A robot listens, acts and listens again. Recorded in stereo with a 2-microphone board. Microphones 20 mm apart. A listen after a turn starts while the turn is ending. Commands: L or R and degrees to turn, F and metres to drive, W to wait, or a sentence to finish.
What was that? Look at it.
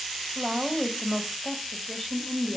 L30
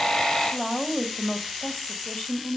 L110
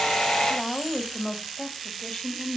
L30
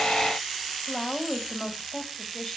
Facing the woman speaking.